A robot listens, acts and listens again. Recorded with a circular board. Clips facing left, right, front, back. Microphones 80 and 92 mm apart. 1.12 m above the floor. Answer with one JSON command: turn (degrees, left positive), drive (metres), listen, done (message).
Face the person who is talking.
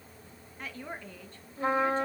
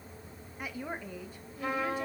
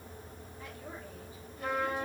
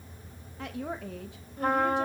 {"turn": -170}
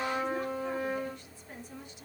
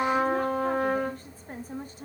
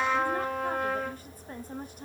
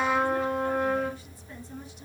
{"turn": -40}
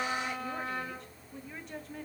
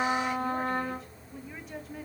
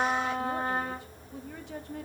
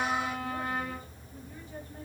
{"done": "Found it: a woman speaking, straight ahead, 1 to 2 m away."}